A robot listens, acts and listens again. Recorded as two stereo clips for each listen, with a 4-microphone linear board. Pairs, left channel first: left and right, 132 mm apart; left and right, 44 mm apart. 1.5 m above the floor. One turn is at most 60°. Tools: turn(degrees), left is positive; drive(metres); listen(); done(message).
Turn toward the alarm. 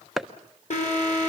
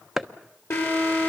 turn(degrees=60)
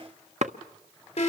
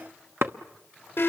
turn(degrees=50)
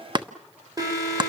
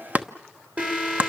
turn(degrees=-30)
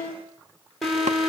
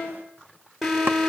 done("Found it: an alarm, straight ahead, over 4 m away.")